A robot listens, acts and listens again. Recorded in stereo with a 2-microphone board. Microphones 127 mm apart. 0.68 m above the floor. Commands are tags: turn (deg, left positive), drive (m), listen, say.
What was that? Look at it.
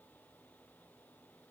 <listen/>
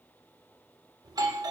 <turn deg="-30"/>
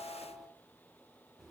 <say>Facing the doorbell.</say>